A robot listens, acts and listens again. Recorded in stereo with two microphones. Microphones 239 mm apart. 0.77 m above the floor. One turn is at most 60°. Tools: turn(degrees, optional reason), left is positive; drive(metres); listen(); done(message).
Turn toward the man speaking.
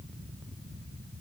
listen()
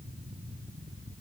listen()
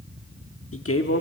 turn(degrees=60, reason="The man speaking: about 70° left or 110° left.")
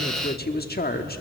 turn(degrees=45, reason="So it is at 45° left.")
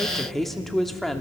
done("Facing the man speaking, 1 to 2 m away.")